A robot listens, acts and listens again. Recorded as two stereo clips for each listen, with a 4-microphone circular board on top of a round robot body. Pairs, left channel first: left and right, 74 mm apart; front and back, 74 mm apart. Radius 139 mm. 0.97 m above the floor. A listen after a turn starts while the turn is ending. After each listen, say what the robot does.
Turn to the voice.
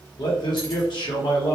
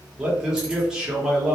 Turn 100° left.
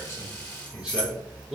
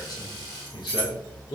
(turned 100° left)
Turn 10° right.
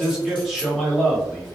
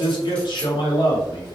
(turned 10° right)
Facing the man speaking, 1 to 2 m away.